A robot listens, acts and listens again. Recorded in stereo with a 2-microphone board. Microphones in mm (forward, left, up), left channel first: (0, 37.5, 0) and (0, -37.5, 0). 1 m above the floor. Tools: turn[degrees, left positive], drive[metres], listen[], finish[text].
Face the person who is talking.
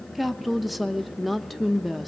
Action: turn[30]
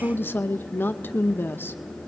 Thought: So it is at 150° left.
Action: turn[150]
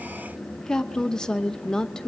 Thought: The woman speaking is now 10° left.
Action: turn[10]
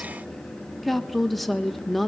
Action: finish[Found it: a woman speaking, straight ahead, under 1 m away.]